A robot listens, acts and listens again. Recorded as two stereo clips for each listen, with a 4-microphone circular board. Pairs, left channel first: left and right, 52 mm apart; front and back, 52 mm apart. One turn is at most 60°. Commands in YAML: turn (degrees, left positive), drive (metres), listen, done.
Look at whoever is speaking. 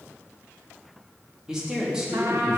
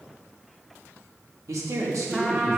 turn: -60
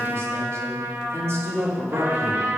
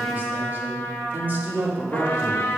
turn: -60
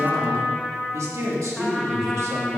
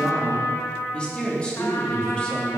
turn: -60
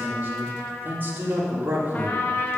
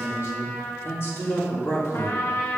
turn: -35
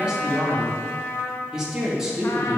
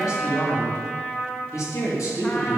turn: -10
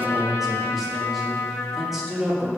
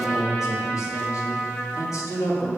done: "Found it: a man speaking, straight ahead, 2 to 4 m away."